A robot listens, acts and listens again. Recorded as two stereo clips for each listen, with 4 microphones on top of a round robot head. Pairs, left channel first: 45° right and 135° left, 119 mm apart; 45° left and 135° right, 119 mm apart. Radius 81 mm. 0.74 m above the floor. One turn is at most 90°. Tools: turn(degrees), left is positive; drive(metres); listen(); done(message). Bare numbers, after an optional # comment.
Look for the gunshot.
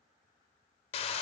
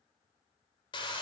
listen()
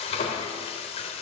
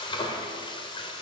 listen()
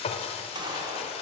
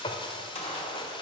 # The gunshot: 80° left.
turn(80)
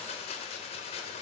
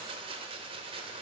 done("Facing where the gunshot came from. I can't hear it now.")